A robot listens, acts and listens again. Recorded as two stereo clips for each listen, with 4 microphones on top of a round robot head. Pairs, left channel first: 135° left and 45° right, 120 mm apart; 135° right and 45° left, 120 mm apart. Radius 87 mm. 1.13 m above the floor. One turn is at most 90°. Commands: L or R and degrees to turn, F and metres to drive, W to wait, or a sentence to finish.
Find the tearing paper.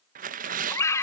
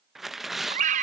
R45
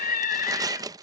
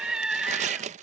L15
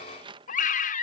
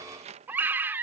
Facing the tearing paper.